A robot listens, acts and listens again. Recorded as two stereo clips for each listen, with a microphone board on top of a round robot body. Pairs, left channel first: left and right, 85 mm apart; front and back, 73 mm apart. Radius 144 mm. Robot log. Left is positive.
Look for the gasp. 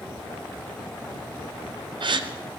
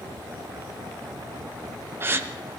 note: The gasp: 120° right.
cmd yaw -120
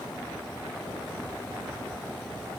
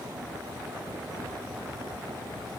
end: I heard a gasp from this way, but can't make it out now.